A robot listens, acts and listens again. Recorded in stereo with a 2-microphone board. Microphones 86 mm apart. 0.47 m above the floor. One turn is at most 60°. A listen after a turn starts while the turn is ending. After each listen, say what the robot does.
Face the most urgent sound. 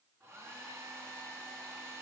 Keep listening.
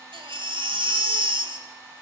Turn 60° right.
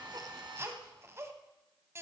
Turn 30° right.
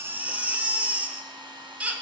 Turn 15° right.
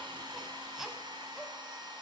Facing the baby crying.